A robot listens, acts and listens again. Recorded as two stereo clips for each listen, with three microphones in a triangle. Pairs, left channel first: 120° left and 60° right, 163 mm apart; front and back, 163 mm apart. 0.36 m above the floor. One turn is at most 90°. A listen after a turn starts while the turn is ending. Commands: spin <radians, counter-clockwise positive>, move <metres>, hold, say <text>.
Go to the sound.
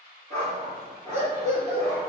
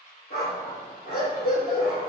spin -0.35
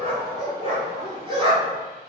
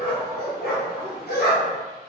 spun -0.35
move 1.0
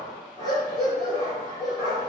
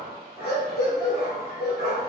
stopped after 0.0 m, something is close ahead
say Blocked. The dog barking is further on, straight ahead.